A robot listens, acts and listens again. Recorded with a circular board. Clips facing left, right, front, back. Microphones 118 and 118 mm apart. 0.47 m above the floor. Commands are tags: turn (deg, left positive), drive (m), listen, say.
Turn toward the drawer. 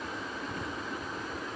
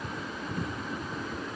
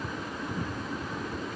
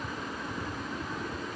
<listen/>
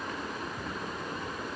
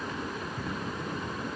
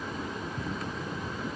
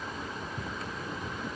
<listen/>
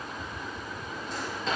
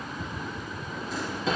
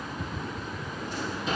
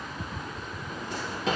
<turn deg="180"/>
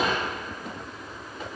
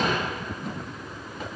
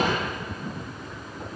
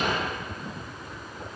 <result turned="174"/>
<say>Facing the drawer, 2 to 4 m away.</say>